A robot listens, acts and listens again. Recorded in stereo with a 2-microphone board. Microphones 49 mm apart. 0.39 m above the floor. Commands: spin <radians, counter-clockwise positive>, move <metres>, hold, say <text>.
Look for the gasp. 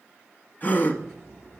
spin 0.70
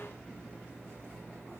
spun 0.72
hold
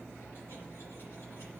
say I heard a gasp, but can't make it out now. It was about straight ahead or 100° left.